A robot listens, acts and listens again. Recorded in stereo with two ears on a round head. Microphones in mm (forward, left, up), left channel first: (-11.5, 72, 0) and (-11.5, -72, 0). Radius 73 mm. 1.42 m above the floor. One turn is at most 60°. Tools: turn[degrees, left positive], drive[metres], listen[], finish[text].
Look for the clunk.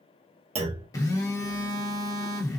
Thought: The clunk: about 40° right or 140° right.
Action: turn[-40]
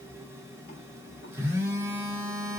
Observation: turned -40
Action: listen[]
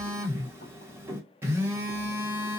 Action: finish[I heard a clunk, but can't make it out now. It was about straight ahead or 100° right.]